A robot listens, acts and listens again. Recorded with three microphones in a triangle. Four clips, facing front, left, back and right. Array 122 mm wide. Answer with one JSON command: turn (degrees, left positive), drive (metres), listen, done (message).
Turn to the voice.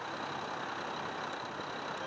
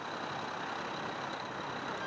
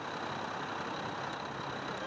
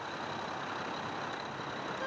{"listen": true}
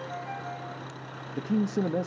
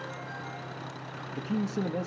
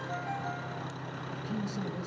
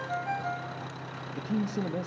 {"done": "Facing the man speaking, 1 to 2 m away."}